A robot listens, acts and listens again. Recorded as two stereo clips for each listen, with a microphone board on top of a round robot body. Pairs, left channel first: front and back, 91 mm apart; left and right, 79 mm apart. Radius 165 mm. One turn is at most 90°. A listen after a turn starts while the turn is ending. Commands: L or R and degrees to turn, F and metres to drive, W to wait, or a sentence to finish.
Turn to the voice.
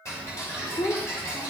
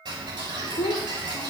L65
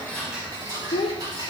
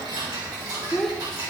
Found it: a child speaking, straight ahead, 1 to 2 m away.